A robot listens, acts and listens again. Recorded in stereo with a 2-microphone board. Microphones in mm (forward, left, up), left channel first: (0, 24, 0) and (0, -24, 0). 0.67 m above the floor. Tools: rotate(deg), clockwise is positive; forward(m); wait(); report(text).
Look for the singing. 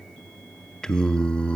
rotate(-25)
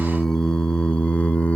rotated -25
rotate(-30)
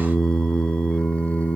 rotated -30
rotate(-30)
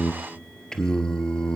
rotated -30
rotate(-15)
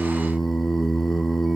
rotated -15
report("Facing the singing.")